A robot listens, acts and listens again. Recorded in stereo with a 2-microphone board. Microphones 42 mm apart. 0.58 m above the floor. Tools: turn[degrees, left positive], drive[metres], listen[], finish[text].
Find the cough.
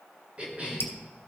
Thought: The cough: about 30° right or 150° right.
Action: turn[-30]
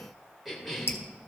Action: finish[Facing the cough.]